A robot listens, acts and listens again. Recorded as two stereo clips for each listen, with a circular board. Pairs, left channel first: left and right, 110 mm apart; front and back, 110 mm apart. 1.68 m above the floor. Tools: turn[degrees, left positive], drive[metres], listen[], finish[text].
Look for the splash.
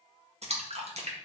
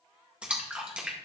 Thought: The splash: 100° right.
Action: turn[-100]
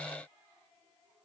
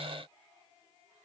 Action: finish[Facing where the splash came from. I can't hear it now.]